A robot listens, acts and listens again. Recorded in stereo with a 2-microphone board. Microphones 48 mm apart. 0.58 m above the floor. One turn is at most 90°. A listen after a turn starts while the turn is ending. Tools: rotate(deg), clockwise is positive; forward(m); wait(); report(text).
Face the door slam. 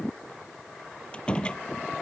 rotate(-20)
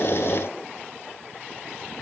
wait()
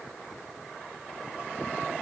report("I heard a door slam, but can't make it out now. It was about straight ahead or 140° left.")